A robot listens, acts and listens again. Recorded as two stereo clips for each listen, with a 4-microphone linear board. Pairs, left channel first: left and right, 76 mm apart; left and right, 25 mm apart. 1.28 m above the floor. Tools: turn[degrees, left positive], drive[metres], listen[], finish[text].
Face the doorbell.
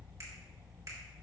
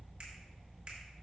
Action: listen[]
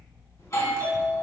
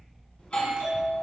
Thought: The doorbell: about 45° left or 135° left.
Action: turn[45]
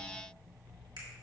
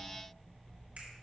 Action: listen[]
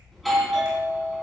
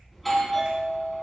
Action: finish[Found it: a doorbell, straight ahead, 2 to 4 m away.]